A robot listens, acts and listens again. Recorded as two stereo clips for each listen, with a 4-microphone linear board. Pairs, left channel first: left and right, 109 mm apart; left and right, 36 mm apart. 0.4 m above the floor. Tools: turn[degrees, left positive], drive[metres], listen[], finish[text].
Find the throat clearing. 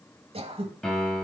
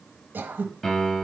Thought: The throat clearing: about 60° right or 120° right.
Action: turn[-60]
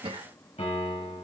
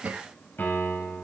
Thought: So it is at 55° right.
Action: turn[-55]
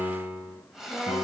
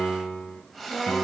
Action: finish[Facing the throat clearing.]